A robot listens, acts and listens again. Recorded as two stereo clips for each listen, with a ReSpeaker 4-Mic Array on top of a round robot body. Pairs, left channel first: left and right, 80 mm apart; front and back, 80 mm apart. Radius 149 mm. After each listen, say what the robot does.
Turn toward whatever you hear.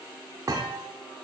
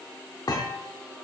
Turn 40° right.
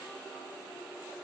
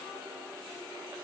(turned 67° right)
Turn 30° left.
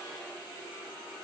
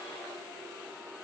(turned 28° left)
I heard a thud from this way, but can't make it out now.